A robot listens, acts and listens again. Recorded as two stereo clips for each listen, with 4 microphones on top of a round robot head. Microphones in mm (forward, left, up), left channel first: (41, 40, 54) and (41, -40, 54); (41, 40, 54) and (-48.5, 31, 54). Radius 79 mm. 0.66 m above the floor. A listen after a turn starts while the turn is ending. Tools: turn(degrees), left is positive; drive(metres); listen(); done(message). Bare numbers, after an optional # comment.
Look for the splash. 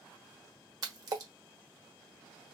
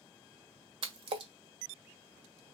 # The splash: 140° right.
turn(-140)
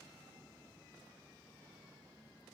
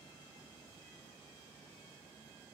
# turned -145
done("I heard a splash from this way, but can't make it out now.")